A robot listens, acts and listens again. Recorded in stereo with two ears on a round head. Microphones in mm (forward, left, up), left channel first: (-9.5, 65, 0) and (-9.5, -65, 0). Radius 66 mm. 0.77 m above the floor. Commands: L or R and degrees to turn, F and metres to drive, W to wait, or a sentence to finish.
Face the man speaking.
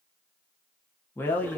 L30
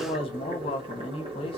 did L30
L130
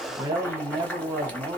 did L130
R20
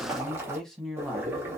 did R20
Facing the man speaking.